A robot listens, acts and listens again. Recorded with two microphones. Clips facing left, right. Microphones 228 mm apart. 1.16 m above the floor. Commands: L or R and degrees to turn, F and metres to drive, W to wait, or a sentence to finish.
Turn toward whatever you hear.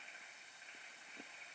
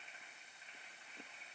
W
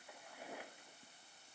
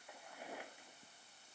W
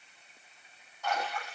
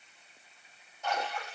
R20
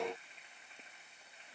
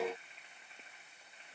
W
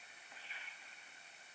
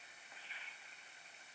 I heard a splash, but can't make it out now. It was about straight ahead or 140° right.